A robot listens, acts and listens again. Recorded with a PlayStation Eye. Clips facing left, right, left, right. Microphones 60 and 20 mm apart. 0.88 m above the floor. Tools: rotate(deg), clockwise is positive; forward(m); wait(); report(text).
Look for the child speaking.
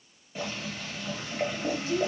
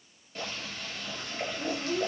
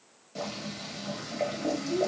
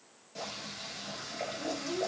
rotate(90)
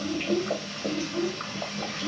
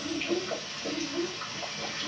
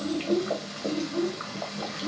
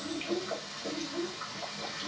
rotate(-35)
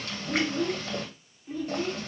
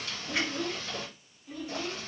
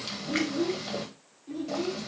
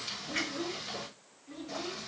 rotate(-20)
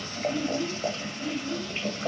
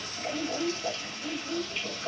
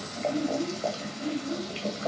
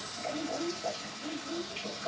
report("Facing the child speaking.")